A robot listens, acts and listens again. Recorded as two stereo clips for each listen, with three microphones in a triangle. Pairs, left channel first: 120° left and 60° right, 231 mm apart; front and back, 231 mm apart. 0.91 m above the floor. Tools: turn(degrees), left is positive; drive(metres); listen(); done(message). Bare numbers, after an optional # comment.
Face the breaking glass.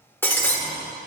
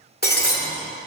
# The breaking glass: 40° left.
turn(40)
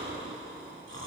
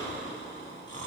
done("I heard breaking glass from this way, but can't make it out now.")